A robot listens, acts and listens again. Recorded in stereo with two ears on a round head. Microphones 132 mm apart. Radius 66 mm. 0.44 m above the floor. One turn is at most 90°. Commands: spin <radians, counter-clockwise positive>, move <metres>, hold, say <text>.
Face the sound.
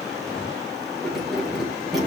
spin 0.52
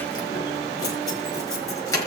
spin 1.57
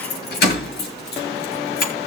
spin 1.40
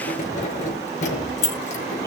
spin 0.87
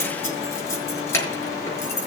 spin 0.26
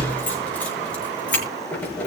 spin 0.17
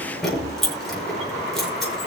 say Facing the keys jangling, over 4 m away.